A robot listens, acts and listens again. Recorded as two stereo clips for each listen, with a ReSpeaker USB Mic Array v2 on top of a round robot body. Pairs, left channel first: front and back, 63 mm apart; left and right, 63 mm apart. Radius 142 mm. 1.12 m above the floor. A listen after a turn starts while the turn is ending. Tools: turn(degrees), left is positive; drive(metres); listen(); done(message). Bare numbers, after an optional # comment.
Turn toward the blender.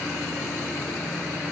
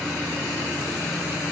listen()
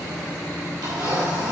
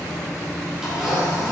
# The blender: 170° right.
turn(-170)
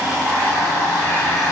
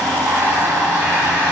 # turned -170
# The blender is now 30° right.
turn(-30)
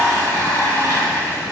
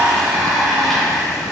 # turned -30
done("Found it: a blender, straight ahead.")